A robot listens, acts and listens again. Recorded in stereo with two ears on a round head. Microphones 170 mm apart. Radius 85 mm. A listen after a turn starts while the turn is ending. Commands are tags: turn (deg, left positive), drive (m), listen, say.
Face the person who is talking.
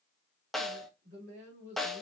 <turn deg="-40"/>
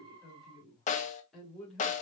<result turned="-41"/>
<say>Found it: a woman speaking, straight ahead.</say>